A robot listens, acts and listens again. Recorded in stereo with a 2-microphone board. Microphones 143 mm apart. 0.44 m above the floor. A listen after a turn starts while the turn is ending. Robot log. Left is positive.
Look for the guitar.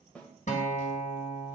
note: The guitar: about 60° left or 120° left.
cmd yaw +60
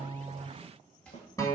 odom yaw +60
note: So it is at 30° left.
cmd yaw +30
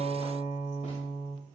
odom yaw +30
end: Facing the guitar.